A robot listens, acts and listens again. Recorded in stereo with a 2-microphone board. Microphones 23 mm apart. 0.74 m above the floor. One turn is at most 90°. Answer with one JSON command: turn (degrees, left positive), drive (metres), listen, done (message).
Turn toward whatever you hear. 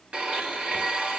{"turn": -50}
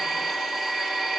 {"done": "Facing the blender, 2 to 4 m away."}